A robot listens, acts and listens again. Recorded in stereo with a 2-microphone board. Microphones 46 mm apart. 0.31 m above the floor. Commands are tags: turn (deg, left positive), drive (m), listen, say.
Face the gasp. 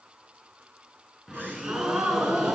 <turn deg="-45"/>
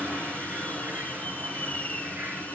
<listen/>
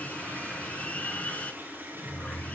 <say>I heard a gasp, but can't make it out now. It was about straight ahead or 90° right.</say>